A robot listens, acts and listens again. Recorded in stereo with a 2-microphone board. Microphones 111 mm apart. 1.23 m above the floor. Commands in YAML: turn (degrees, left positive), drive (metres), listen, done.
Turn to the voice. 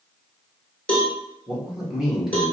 turn: -30
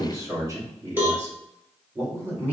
turn: -160
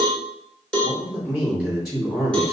done: "Found it: a man speaking, straight ahead, 2 to 4 m away."